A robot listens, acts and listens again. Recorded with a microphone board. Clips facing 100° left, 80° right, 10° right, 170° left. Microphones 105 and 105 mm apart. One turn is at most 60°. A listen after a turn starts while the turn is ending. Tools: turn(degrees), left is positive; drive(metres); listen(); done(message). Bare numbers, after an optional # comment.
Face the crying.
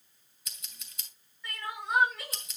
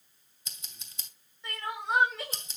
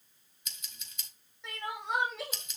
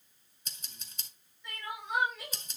# The crying: 15° right.
turn(-15)
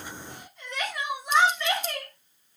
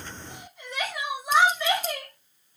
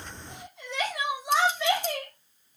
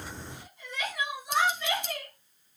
done("Facing the crying.")